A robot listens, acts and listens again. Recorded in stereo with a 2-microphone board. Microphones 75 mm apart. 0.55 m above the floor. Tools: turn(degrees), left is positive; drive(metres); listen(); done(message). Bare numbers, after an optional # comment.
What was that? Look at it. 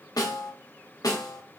# The snare drum: about 55° left or 125° left.
turn(55)
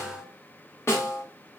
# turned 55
# So it is at 45° left.
turn(45)
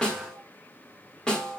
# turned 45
# The snare drum is now 10° left.
turn(10)
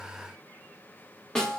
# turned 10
# The snare drum is now 10° left.
turn(10)
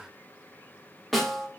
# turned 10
done("Facing the snare drum, 1 to 2 m away.")